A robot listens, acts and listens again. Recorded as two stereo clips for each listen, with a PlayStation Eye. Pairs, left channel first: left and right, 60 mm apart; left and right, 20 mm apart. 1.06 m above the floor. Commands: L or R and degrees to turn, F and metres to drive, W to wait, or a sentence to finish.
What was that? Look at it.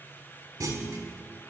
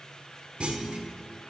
R65
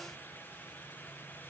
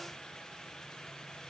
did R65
W
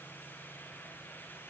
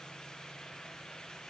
I heard a clunk, but can't make it out now. It was about straight ahead or 50° right.